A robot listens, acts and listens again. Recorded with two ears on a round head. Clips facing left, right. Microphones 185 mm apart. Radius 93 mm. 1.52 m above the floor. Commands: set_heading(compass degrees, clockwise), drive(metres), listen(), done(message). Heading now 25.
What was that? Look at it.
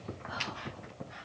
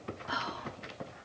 set_heading(115)
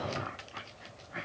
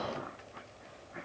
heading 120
listen()
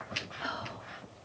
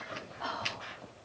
set_heading(105)
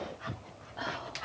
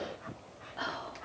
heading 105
done("Found it: whispering, straight ahead.")